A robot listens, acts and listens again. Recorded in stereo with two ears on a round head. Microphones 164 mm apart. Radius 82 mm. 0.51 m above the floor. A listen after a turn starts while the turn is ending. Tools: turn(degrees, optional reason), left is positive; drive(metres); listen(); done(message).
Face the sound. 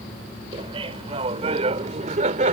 turn(degrees=-40, reason="The laughter: about 40° right or 140° right.")
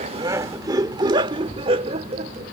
turn(degrees=-35, reason="The laughter: about 35° right or 145° right.")
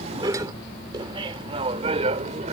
turn(degrees=-35, reason="The laughter: about 35° right or 145° right.")
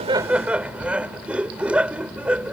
done("Found it: laughter, straight ahead.")